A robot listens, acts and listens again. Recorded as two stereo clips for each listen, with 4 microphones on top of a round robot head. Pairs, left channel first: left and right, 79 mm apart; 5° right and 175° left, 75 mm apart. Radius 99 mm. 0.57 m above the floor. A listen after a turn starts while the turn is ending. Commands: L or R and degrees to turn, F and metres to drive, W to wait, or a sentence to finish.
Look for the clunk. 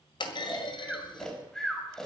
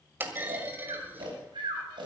L110
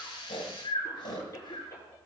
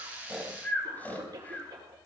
I heard a clunk from this way, but can't make it out now.